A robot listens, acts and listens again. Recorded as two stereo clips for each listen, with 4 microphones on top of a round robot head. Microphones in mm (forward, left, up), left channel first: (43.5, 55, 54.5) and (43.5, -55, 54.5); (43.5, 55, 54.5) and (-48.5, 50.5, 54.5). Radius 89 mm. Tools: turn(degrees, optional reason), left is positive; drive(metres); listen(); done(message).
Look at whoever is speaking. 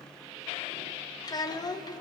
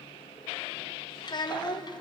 turn(degrees=40, reason="The child speaking: 40° left.")
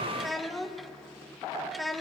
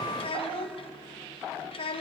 done("Found it: a child speaking, straight ahead, 1 to 2 m away.")